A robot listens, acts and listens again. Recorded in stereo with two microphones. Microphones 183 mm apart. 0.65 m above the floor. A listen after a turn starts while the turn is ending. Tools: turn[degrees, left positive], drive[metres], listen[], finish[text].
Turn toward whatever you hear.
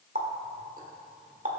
Thought: The running tap: about 50° right or 130° right.
Action: turn[-50]
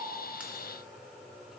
Action: listen[]
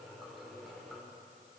Action: listen[]
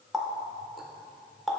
Action: finish[Facing the running tap.]